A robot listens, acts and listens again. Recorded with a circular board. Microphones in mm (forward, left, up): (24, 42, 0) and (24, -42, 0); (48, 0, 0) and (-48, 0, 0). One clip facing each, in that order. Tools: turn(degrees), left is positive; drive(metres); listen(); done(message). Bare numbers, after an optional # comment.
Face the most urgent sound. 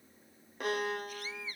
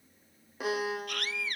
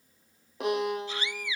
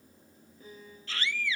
# The scream: 75° right.
turn(-75)
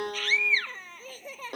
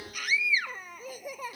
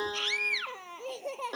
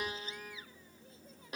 # The scream is now 10° right.
turn(-10)
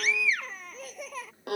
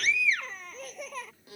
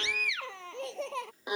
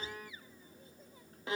done("Facing the scream.")